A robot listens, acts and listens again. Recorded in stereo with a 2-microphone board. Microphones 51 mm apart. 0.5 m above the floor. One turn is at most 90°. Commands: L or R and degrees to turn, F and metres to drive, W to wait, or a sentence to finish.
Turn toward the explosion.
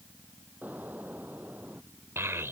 R35
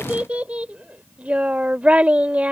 W
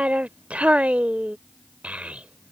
I heard an explosion, but can't make it out now. It was about straight ahead or 110° right.